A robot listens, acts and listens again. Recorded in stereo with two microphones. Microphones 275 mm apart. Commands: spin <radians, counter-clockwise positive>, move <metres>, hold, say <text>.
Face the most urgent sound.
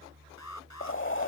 spin 1.57
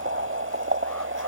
hold
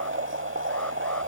hold
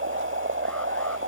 say Facing where the alarm came from. I can't hear it now.